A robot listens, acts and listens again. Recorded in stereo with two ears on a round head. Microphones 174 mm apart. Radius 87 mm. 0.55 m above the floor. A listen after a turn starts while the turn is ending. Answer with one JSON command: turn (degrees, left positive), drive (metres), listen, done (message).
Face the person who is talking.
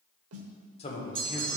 {"turn": 30}
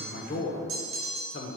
{"turn": 110}
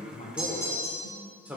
{"turn": -10}
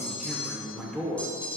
{"done": "Facing the man speaking, 1 to 2 m away."}